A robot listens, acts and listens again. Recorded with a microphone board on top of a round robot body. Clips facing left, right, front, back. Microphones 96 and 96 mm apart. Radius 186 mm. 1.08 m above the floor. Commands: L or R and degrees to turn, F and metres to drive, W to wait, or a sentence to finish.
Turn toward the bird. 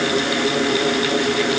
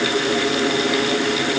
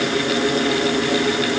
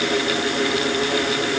W
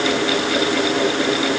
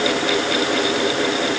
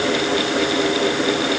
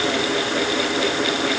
W
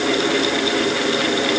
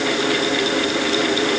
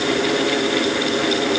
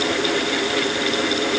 I can't make out a bird.